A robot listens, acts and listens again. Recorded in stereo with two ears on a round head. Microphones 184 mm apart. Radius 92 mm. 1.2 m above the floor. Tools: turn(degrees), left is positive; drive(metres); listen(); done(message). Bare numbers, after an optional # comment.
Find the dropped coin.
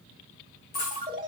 # The dropped coin: about 45° left or 135° left.
turn(45)
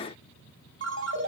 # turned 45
listen()
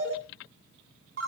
done("I heard a dropped coin, but can't make it out now. It was about straight ahead or 90° left.")